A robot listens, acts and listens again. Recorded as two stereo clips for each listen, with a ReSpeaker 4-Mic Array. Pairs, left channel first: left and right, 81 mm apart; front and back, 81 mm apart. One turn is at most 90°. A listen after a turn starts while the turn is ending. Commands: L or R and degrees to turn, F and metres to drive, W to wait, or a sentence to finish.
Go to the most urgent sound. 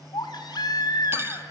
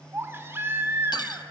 L90
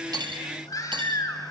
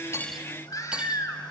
L45
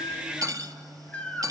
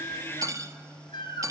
L15
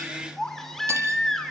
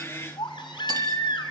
F1.0
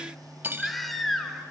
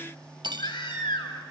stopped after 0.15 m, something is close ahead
Blocked. The baby crying is further on, straight ahead.